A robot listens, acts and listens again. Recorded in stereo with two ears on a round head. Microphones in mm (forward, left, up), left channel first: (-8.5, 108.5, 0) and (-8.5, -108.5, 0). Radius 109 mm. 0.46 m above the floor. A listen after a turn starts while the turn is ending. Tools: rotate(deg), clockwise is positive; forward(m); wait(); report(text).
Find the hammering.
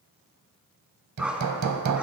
rotate(90)
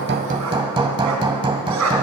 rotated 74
rotate(20)
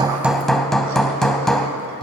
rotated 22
report("Facing the hammering, under 1 m away.")